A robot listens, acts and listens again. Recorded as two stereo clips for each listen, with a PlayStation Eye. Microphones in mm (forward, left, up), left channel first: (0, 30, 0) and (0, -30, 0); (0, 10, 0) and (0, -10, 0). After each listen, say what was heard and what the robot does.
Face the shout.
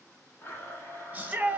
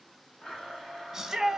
The shout: about 25° right or 155° right. Turn 25° right.
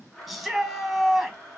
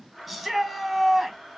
Found it: a shout, straight ahead.